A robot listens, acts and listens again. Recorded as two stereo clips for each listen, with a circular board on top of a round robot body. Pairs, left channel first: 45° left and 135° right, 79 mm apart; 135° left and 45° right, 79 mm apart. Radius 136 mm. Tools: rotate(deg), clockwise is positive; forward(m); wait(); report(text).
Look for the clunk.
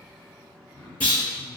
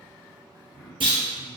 rotate(30)
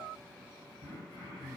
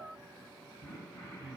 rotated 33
report("Facing where the clunk came from. I can't hear it now.")